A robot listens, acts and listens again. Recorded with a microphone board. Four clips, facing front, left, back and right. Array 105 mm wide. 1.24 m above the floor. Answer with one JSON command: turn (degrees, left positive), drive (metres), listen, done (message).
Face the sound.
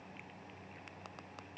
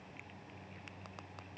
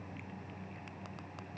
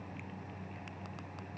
{"listen": true}
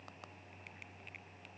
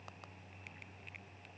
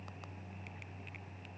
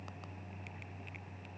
{"listen": true}
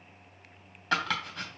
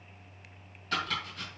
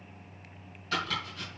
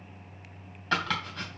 {"turn": -40}
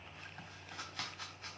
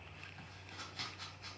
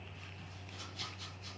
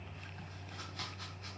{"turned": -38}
{"listen": true}
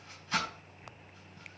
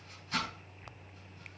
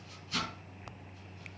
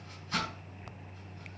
{"done": "Found it: chopping, straight ahead, 2 to 4 m away."}